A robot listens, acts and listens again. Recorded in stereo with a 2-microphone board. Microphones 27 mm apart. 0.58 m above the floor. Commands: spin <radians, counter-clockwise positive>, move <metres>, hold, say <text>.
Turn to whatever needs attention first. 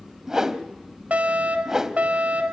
spin -1.13
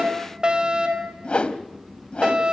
spin -0.79
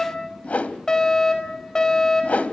spin 0.44
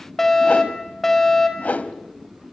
spin 0.17
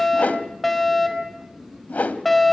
say Found it: a fire alarm, straight ahead, over 4 m away.